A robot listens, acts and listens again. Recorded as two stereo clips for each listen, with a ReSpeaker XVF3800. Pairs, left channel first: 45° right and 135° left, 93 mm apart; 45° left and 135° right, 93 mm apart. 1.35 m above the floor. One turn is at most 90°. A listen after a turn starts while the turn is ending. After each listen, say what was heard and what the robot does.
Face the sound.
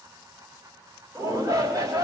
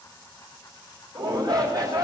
The shout: 175° right. Turn 90° right.
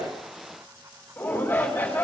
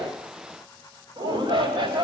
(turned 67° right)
The shout is now 110° right. Turn 90° right.
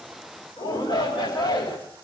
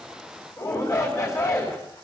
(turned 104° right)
The shout is now 10° right. Turn 10° right.
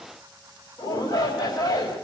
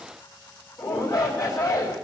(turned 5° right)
Facing the shout, 2 to 4 m away.